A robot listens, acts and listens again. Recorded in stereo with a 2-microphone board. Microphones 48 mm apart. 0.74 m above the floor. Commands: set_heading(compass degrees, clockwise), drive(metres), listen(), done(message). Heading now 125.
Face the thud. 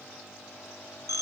listen()
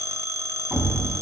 set_heading(145)
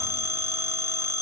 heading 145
listen()
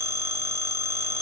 done("I heard a thud, but can't make it out now. It was about straight ahead or 140° right.")